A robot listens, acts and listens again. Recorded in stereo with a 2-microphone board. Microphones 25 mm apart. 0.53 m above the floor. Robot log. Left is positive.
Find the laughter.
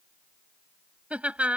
note: The laughter: about 55° right or 125° right.
cmd yaw -55
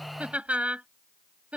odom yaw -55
note: So it is at 65° right.
cmd yaw -65
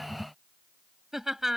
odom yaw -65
note: The laughter is now 15° right.
cmd yaw -15
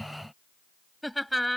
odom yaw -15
end: Found it: laughter, straight ahead.